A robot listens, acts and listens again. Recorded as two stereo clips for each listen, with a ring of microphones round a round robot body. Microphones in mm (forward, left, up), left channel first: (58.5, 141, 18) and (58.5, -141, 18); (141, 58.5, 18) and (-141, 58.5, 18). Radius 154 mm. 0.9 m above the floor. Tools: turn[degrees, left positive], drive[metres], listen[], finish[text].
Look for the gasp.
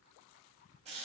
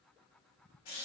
Action: listen[]
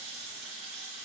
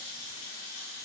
Action: listen[]
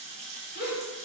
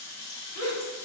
Thought: The gasp: 35° left.
Action: turn[35]
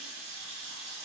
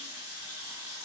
Action: finish[Facing where the gasp came from. I can't hear it now.]